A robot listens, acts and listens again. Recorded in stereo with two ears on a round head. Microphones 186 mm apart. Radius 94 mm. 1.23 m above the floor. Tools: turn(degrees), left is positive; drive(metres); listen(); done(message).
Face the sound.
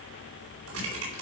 turn(degrees=-90)
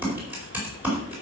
turn(degrees=-10)
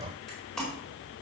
done("Facing the typing on a keyboard, over 4 m away.")